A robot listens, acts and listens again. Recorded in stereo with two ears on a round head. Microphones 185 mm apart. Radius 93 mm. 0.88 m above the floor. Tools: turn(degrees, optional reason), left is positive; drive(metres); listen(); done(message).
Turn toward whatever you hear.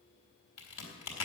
turn(degrees=90)
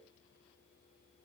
done("Facing where the crack came from. I can't hear it now.")